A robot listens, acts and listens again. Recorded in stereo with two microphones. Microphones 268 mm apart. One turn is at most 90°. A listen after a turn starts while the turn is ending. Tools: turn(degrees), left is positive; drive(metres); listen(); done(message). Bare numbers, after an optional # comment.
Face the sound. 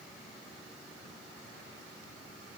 listen()
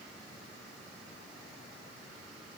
listen()
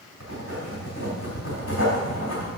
# The writing: about 55° left or 125° left.
turn(55)
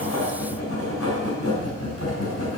# So it is at 70° left.
turn(70)
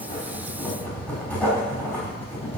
done("Found it: writing, straight ahead.")